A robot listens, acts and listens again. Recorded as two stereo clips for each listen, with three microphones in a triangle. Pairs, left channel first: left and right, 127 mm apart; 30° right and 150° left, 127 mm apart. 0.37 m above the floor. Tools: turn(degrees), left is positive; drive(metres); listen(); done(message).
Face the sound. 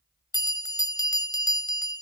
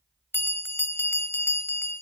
turn(degrees=40)
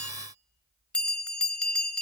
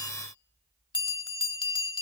turn(degrees=10)
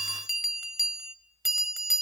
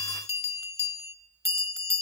done("Found it: a bell, straight ahead.")